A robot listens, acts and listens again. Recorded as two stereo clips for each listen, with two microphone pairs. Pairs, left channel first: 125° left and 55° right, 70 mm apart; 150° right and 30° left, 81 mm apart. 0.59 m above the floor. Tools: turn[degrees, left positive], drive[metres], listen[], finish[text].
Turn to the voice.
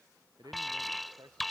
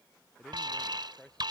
Thought: The man speaking: 70° right.
Action: turn[-70]
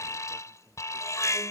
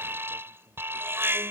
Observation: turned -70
Action: listen[]
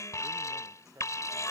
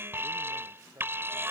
Thought: The man speaking is now 15° right.
Action: turn[-15]
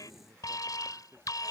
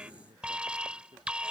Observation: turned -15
Action: finish[Facing the man speaking.]